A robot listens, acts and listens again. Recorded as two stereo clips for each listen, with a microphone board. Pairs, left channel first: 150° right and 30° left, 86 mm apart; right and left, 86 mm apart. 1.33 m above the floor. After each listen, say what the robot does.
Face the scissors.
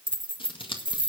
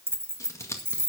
Turn 145° right.
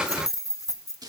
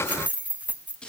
Turn 10° right.
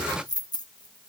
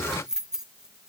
Keep listening.
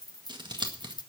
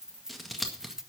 Facing the scissors, 1 to 2 m away.